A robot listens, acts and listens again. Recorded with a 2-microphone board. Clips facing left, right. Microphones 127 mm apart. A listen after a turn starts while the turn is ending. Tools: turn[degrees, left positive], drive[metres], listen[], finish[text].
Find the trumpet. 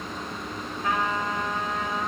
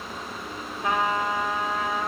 Thought: The trumpet: about 20° right or 160° right.
Action: turn[-20]
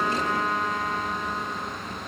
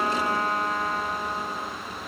Thought: So it is at 140° right.
Action: turn[-140]
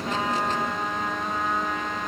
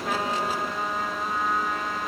Action: finish[Facing the trumpet, 2 to 4 m away.]